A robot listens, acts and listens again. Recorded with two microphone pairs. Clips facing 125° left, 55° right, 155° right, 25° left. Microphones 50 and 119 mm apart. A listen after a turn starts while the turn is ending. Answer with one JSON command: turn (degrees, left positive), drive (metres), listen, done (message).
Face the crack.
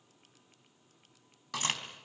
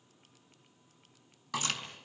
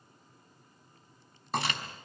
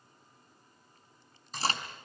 {"turn": 80}
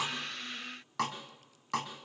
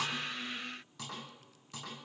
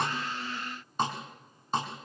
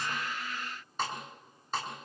{"done": "Facing where the crack came from. I can't hear it now."}